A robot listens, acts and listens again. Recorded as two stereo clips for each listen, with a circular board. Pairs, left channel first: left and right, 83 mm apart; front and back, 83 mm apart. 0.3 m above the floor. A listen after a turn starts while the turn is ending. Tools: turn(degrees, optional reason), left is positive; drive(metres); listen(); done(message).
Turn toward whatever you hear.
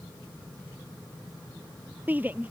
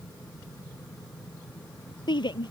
turn(degrees=-20, reason="The shout: 20° right.")
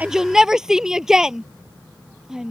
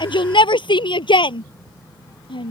done("Facing the shout.")